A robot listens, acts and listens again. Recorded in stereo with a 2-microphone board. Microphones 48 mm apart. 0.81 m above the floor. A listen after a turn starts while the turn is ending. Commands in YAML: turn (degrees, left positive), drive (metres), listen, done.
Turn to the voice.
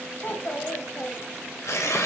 turn: 55
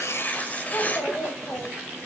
turn: 70
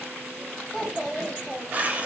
turn: 10
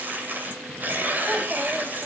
listen: true
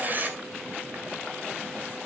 listen: true
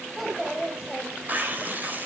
done: "Found it: a child speaking, straight ahead, 2 to 4 m away."